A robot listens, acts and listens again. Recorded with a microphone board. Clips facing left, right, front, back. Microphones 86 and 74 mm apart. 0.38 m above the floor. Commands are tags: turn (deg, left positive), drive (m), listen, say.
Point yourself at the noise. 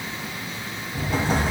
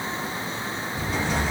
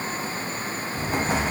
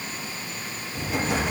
<turn deg="50"/>
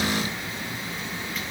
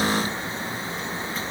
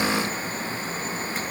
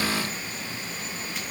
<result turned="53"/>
<say>Facing where the explosion came from. I can't hear it now.</say>